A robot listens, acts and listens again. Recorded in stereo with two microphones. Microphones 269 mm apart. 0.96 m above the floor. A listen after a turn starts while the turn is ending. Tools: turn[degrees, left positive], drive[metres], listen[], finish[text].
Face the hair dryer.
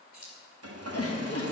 Thought: The hair dryer: about 65° right or 115° right.
Action: turn[-65]
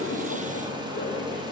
Thought: So it is at 20° right.
Action: turn[-20]
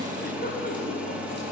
Action: finish[Found it: a hair dryer, straight ahead, under 1 m away.]